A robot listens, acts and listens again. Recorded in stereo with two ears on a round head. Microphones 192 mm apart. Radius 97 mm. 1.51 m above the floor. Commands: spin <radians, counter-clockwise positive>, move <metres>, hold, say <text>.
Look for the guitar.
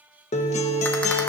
spin 0.52
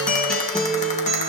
say Facing the guitar, 1 to 2 m away.